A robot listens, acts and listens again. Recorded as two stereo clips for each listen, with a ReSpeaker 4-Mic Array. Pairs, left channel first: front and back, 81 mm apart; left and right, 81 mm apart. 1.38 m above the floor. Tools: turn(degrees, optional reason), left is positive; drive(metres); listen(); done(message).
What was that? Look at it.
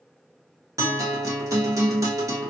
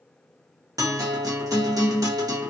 turn(degrees=-130, reason="The guitar: 130° right.")
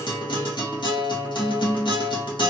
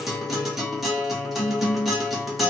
done("Facing the guitar.")